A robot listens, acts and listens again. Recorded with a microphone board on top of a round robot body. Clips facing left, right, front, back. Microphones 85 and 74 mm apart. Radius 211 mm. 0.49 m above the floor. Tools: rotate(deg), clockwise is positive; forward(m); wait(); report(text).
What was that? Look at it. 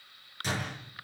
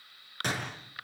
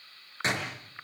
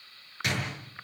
rotate(60)
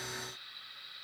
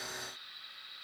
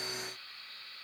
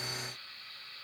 report("Facing where the door slam came from. I can't hear it now.")